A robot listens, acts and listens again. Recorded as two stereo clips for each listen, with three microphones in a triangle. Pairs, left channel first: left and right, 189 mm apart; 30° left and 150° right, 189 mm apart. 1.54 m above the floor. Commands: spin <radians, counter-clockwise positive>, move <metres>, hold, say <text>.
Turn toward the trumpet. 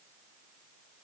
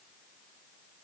hold
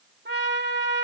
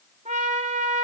spin -1.75
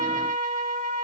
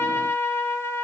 spin -0.79
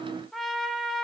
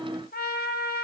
say Facing the trumpet.